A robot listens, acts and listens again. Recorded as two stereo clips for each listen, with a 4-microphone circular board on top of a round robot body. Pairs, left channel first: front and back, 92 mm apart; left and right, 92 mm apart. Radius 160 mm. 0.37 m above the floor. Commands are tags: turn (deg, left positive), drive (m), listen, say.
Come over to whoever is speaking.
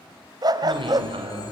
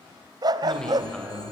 <turn deg="170"/>
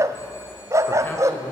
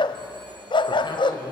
<listen/>
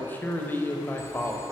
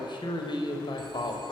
<turn deg="70"/>
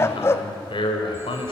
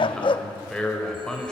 <turn deg="10"/>
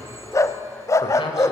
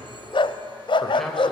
<listen/>
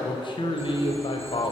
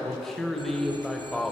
<drive m="1.0"/>
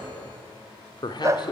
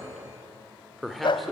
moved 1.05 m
<drive m="1.0"/>
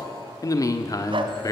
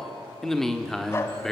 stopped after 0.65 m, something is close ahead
<say>Arrived at the man speaking, straight ahead.</say>